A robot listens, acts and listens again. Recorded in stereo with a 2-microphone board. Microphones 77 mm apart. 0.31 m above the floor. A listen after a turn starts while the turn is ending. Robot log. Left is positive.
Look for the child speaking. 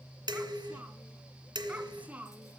note: The child speaking: about 20° right or 160° right.
cmd yaw -20
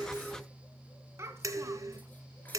note: So it is at 140° right.
cmd yaw -140
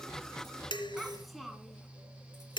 end: Found it: a child speaking, straight ahead.